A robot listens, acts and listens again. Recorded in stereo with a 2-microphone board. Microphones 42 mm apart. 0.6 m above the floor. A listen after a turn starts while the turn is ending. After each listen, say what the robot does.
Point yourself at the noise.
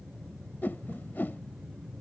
Turn 55° left.
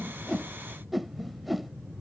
Facing the whoosh.